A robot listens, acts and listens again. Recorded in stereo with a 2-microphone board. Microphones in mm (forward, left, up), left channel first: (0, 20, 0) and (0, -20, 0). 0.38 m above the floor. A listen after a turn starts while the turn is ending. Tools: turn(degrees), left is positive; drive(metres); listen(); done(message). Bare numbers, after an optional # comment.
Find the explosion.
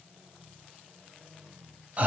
listen()
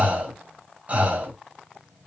listen()
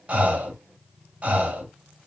done("I can't make out an explosion, only breathing.")